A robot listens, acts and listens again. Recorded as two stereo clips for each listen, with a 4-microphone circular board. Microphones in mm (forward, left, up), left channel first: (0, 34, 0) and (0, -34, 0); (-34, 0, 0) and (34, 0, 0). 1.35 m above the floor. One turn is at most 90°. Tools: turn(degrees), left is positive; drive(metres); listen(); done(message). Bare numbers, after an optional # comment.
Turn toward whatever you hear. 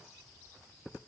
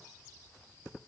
listen()
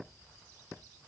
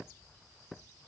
listen()
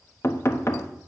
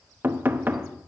# The knocking: 55° left.
turn(55)
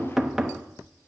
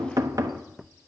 done("Facing the knocking, under 1 m away.")